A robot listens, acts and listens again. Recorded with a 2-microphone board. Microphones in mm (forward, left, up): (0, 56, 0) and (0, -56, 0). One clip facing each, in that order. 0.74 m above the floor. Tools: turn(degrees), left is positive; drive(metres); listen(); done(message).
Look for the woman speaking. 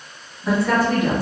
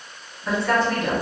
turn(degrees=30)
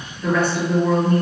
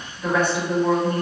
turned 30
turn(degrees=-25)
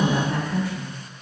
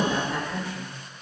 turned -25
done("Facing the woman speaking.")